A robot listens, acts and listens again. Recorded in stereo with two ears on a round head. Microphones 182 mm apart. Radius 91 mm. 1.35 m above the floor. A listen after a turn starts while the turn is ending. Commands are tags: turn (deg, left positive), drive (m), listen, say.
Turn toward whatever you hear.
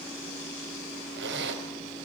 <turn deg="-60"/>
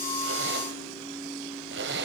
<turn deg="-55"/>
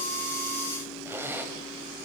<turn deg="-10"/>
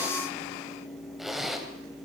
<say>Found it: a zipper, straight ahead.</say>